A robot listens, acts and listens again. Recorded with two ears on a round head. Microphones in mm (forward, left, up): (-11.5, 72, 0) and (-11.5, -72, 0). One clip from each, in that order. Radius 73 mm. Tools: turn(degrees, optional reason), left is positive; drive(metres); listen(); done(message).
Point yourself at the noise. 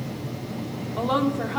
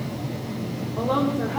turn(degrees=70, reason="The woman speaking: about 70° left or 110° left.")
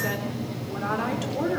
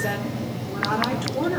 turn(degrees=10, reason="So it is at 10° left.")
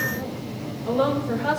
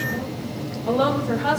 done("Found it: a woman speaking, straight ahead, 2 to 4 m away.")